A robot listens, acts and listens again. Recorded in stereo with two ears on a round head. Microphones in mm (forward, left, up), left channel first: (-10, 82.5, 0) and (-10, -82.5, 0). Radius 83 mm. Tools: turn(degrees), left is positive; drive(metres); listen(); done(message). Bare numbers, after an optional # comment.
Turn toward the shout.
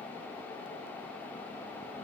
listen()
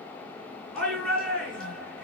turn(30)
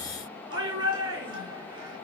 # So it is at 25° right.
turn(-25)
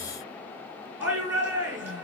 # The shout is now 10° right.
turn(-10)
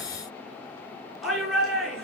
done("Found it: a shout, straight ahead.")